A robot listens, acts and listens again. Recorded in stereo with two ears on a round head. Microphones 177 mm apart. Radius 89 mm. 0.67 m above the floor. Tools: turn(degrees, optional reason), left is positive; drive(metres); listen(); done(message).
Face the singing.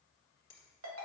listen()
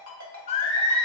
turn(degrees=30, reason="The singing: about 30° left or 150° left.")
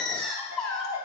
done("Found it: singing, straight ahead.")